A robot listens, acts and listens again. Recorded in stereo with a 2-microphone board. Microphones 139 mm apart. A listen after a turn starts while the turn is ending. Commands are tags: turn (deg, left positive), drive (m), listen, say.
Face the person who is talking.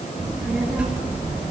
<turn deg="-30"/>
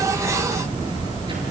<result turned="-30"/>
<turn deg="-145"/>
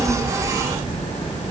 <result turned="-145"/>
<turn deg="30"/>
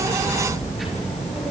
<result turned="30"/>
<say>Found it: a child speaking, straight ahead, over 4 m away.</say>